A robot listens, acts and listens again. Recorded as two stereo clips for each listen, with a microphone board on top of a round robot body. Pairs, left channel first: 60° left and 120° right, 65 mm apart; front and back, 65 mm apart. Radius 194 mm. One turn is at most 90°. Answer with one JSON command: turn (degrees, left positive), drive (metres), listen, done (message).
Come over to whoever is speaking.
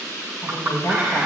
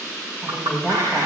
{"turn": 90}
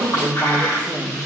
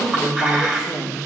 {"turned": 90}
{"turn": 30}
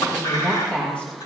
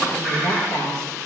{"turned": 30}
{"drive": 1.0}
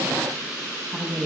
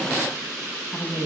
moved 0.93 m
{"turn": -10}
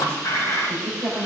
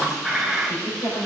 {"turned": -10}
{"drive": 1.0}
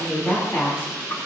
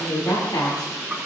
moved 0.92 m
{"drive": 1.0}
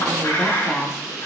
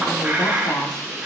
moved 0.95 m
{"turn": 10}
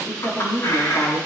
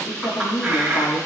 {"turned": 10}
{"drive": 1.0}
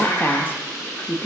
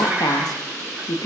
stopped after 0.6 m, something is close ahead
{"done": "I am next to the woman speaking."}